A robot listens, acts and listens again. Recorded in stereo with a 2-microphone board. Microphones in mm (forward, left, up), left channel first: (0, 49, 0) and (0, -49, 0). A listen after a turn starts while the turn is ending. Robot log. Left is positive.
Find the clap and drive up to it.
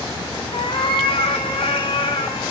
cmd idle
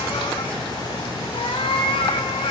cmd idle
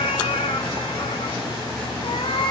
end: I can't make out a clap to turn to.